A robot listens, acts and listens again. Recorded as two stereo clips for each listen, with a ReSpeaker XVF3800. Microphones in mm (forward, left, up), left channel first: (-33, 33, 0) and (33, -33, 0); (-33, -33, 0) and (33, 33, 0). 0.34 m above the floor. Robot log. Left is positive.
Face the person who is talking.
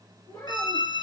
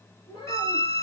note: The child speaking: 170° right.
cmd yaw -170
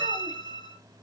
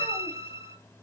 cmd idle
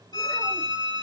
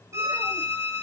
cmd idle
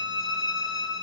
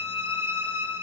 end: Facing where the child speaking came from. I can't hear it now.